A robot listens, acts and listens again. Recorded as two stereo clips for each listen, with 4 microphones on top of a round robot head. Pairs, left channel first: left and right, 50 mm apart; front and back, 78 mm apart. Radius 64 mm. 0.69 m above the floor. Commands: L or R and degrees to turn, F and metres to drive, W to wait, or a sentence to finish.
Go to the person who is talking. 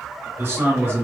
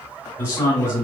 R60
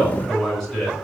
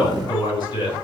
F1.0
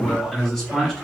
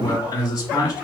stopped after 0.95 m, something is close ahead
I am next to the man speaking.